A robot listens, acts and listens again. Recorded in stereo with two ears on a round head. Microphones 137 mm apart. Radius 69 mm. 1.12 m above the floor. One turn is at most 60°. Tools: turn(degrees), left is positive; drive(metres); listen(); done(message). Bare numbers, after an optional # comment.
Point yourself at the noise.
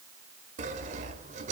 # The sawing: about 50° right or 130° right.
turn(-50)
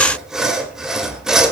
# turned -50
done("Facing the sawing.")